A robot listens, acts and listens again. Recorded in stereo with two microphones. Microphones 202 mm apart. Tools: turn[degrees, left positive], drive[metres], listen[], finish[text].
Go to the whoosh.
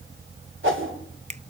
Action: turn[-90]
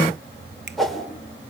Action: drive[1.0]
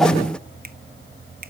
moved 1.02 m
Action: listen[]
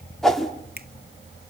Action: drive[1.0]
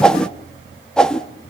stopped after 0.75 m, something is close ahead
Action: finish[I am next to the whoosh.]